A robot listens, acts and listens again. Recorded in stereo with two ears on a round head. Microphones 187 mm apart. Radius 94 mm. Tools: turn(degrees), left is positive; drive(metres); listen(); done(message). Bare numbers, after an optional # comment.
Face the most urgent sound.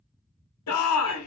turn(90)
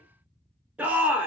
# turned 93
done("Facing the shout.")